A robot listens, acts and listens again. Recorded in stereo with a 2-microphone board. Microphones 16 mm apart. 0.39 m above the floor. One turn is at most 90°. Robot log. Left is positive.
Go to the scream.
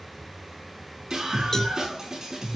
note: The scream: about 35° right or 145° right.
cmd yaw -35
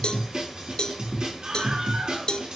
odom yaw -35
note: So it is at 110° right.
cmd yaw -90
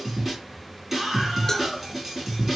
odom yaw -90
note: The scream is now 20° right.
cmd yaw -20
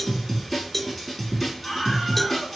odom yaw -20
cmd fwd 1.0
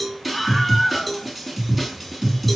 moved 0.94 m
cmd fwd 1.0
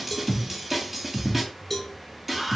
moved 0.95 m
note: The scream is now 10° right.
cmd yaw -10
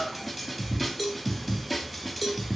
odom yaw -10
cmd fwd 1.0
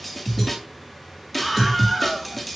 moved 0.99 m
cmd fwd 1.0
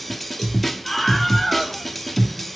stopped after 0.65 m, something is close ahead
end: Arrived at the scream, straight ahead.